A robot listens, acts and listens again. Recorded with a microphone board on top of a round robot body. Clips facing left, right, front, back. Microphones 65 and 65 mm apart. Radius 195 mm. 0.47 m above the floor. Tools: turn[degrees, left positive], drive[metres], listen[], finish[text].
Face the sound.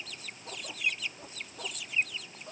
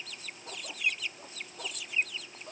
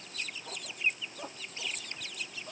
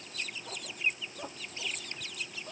Action: listen[]
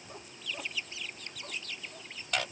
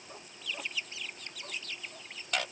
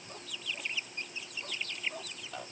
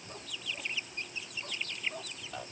Action: listen[]
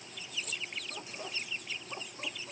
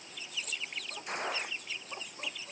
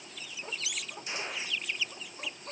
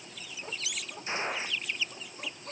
Thought: The gunshot: 120° right.
Action: turn[-120]
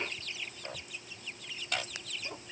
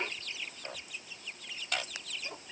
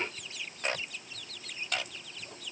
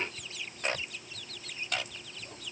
Action: finish[I heard a gunshot from this way, but can't make it out now.]